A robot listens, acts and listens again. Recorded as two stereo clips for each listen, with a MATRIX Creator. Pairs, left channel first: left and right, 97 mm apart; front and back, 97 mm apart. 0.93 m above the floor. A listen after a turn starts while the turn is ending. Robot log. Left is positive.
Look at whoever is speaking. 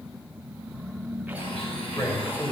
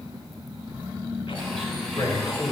note: The man speaking: 40° left.
cmd yaw +40
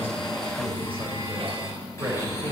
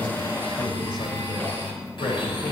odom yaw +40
note: The man speaking is now 25° right.
cmd yaw -25
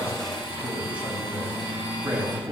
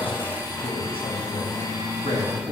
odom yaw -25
note: The man speaking is now 15° right.
cmd yaw -15
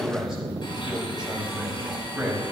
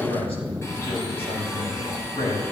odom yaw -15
end: Found it: a man speaking, straight ahead, over 4 m away.